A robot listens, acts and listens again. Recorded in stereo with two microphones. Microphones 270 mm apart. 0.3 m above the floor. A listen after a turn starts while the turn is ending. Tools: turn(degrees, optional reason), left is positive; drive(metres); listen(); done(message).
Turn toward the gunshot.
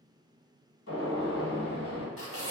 turn(degrees=65, reason="The gunshot: about 65° left or 115° left.")
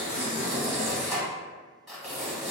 listen()
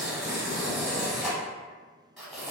done("I heard a gunshot, but can't make it out now. It was about straight ahead or 50° left.")